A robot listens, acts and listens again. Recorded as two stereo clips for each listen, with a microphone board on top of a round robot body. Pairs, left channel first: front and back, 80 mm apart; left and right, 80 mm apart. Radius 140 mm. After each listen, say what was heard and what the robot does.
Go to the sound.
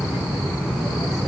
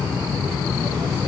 Keep listening.
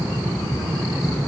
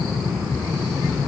Keep listening.
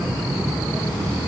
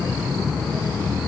I can't make out anything.